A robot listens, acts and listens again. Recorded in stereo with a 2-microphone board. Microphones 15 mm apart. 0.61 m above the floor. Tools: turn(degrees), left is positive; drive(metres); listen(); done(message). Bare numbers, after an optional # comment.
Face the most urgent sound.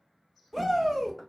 turn(30)
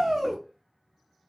# So it is at 20° right.
turn(-20)
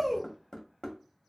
done("Facing the shout, 1 to 2 m away.")